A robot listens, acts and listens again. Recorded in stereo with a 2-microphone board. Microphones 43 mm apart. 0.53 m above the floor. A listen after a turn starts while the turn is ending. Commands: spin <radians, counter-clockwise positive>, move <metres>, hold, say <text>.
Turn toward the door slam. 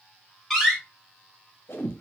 spin 0.52
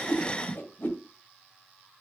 hold
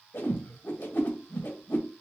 say I heard a door slam, but can't make it out now. It was about 25° right or 145° left.